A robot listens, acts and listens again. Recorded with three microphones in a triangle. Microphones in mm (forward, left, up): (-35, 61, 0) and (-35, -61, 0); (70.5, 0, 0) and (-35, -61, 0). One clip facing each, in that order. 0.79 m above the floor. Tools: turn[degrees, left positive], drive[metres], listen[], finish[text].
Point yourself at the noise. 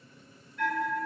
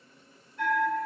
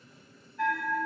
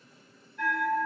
Thought: The bell: 160° right.
Action: turn[-160]
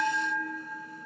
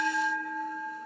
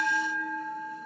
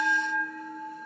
Action: finish[Found it: a bell, straight ahead, 1 to 2 m away.]